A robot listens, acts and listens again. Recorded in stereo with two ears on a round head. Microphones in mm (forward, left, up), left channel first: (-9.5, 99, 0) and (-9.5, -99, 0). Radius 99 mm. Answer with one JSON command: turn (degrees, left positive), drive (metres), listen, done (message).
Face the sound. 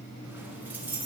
{"turn": -30}
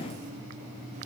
{"listen": true}
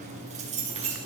{"turn": -150}
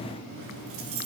{"turn": -65}
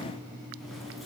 {"listen": true}
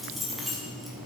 {"done": "Found it: keys jangling, straight ahead, over 4 m away."}